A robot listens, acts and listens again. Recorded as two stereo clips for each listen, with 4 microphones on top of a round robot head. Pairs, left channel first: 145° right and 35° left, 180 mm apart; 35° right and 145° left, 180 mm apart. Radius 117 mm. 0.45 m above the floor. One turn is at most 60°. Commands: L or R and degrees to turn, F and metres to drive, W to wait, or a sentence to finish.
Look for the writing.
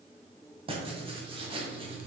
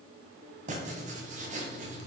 L60
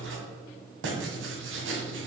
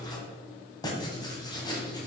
L35
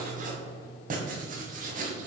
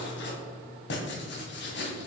R10
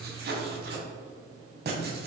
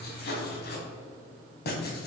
Facing the writing, 1 to 2 m away.